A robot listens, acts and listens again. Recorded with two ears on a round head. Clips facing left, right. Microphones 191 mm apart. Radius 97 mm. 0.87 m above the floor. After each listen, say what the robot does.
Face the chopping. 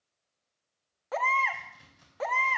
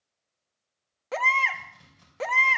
Turn 30° left.
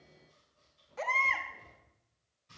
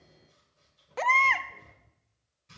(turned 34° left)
Turn 25° right.
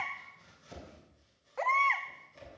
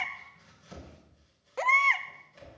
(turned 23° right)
Facing the chopping.